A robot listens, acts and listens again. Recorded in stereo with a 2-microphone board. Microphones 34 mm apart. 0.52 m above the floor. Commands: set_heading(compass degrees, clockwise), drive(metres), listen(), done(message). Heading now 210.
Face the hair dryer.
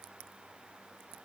listen()
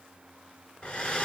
set_heading(175)
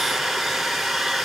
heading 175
done("Facing the hair dryer, 1 to 2 m away.")